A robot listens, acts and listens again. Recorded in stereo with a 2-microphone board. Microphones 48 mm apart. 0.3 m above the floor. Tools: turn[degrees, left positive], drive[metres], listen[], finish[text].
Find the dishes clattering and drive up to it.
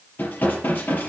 Thought: The dishes clattering: about 50° left or 130° left.
Action: turn[50]
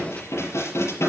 Thought: So it is at 80° left.
Action: turn[80]
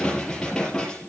Thought: The dishes clattering is now 15° left.
Action: turn[15]
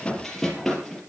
Action: drive[1.0]
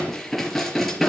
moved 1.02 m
Action: drive[1.0]
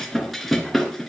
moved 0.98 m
Action: drive[1.0]
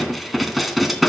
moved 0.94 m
Action: drive[1.0]
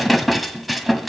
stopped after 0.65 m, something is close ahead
Action: finish[Arrived at the dishes clattering, straight ahead.]